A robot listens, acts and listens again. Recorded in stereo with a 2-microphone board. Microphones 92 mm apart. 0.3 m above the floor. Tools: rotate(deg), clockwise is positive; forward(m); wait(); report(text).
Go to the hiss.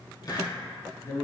rotate(-45)
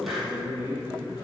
wait()
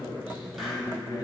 wait()
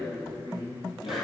report("I heard a hiss, but can't make it out now. It was about straight ahead or 90° left. I did not reach it.")